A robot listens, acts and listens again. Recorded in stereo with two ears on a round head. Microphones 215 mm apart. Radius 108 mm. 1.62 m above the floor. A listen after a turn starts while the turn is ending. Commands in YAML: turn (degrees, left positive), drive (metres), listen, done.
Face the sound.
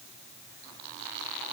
listen: true
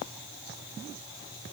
listen: true
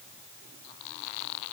done: "I can't make out anything to turn to."